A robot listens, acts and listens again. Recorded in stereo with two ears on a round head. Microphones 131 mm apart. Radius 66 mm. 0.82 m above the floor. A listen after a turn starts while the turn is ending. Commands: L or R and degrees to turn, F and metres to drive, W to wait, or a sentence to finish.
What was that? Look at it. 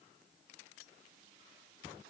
W
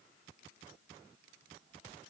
W
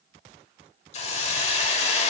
L45
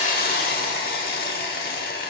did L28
L100
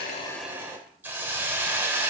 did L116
R15
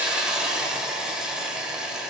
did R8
Facing the hiss.